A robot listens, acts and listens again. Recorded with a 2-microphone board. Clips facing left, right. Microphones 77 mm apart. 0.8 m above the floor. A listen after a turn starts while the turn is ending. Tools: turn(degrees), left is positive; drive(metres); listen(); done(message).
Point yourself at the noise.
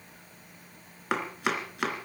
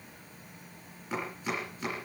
turn(degrees=90)
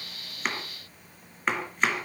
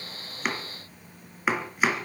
done("Facing the chopping, 2 to 4 m away.")